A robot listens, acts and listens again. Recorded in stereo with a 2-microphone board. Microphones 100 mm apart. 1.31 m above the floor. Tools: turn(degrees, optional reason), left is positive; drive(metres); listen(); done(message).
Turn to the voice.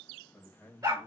turn(degrees=30)
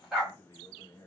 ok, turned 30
turn(degrees=145, reason="So it is at 145° left.")
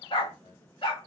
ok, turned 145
turn(degrees=55, reason="The man speaking is now 55° left.")
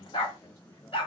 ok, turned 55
turn(degrees=35, reason="The man speaking is now 35° left.")
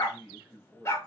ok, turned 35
turn(degrees=-15, reason="The man speaking is now 15° right.")
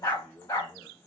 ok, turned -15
done("Found it: a man speaking, straight ahead, 1 to 2 m away.")